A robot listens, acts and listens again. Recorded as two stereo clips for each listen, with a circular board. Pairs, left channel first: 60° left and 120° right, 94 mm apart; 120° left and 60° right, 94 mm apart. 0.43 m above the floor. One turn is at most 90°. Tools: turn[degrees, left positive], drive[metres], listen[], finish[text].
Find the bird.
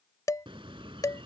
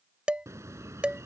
Thought: The bird: 115° right.
Action: turn[-90]
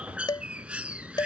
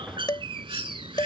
Thought: The bird is now 45° right.
Action: turn[-45]
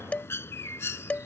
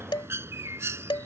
Action: finish[Facing the bird.]